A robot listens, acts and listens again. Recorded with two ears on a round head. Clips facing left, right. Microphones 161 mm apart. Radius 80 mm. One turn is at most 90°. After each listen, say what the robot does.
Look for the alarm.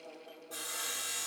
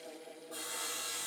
Keep listening.
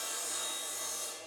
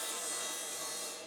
Keep listening.
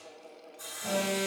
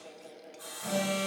Turn 35° left.
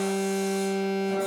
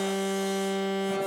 Facing the alarm, over 4 m away.